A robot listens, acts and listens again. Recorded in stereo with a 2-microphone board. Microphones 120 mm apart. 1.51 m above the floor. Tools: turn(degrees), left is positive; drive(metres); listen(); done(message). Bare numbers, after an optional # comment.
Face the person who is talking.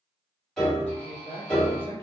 # The man speaking: about 50° right or 130° right.
turn(-50)
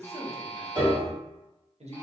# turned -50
# So it is at 75° right.
turn(-75)
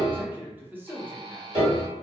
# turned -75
# The man speaking is now 15° right.
turn(-15)
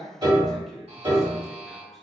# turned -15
done("Found it: a man speaking, straight ahead.")